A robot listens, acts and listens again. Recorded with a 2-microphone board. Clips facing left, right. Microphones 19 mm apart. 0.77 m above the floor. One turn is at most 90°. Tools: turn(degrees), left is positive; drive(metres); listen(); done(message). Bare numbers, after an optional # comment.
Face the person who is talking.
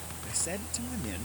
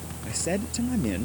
turn(-30)
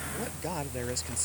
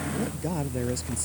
# So it is at 15° left.
turn(15)
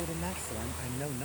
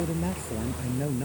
done("Found it: a man speaking, straight ahead.")